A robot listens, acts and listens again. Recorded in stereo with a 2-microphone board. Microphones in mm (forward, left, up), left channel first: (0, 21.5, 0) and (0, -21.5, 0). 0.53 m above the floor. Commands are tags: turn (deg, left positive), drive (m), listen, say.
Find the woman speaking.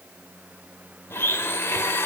<listen/>
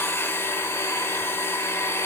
<listen/>
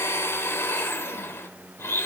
<say>I can't make out a woman speaking to turn to.</say>